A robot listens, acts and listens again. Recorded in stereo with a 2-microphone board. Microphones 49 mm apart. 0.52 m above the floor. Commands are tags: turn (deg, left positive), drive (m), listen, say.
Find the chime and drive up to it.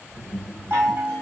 <turn deg="-60"/>
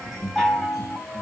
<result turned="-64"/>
<drive m="1.0"/>
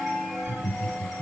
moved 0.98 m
<drive m="1.0"/>
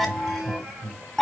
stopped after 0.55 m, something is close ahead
<say>Arrived at the chime, straight ahead.</say>